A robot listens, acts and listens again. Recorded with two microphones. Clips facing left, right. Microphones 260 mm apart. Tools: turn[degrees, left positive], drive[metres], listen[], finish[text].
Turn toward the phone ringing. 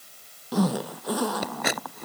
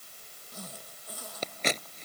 Action: listen[]
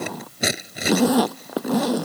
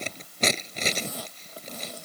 Action: listen[]
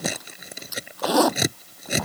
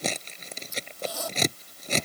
Action: finish[I can't make out a phone ringing, only a zipper and scissors.]